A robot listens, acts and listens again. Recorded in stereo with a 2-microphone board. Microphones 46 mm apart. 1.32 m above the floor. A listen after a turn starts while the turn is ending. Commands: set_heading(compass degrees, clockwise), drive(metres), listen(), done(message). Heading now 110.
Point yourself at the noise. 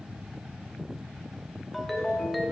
set_heading(80)
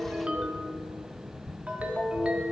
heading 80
set_heading(110)
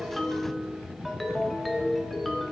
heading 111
done("Facing the ringtone, 1 to 2 m away.")